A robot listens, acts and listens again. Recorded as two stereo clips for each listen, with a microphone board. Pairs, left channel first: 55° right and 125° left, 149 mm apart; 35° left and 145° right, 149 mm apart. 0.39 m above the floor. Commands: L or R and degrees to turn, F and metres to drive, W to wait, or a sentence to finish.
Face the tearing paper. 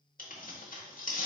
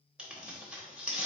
R65
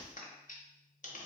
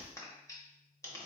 R30
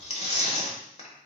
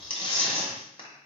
R15
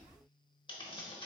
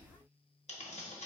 Facing the tearing paper, under 1 m away.